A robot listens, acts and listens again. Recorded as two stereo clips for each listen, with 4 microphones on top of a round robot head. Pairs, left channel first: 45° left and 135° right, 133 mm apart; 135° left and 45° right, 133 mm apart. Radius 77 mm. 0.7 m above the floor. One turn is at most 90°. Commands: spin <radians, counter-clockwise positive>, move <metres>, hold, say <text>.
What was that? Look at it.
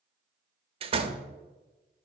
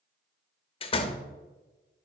spin 1.57
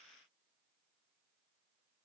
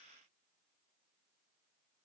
spin 1.57
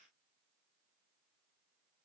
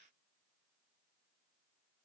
say Facing where the door slam came from. I can't hear it now.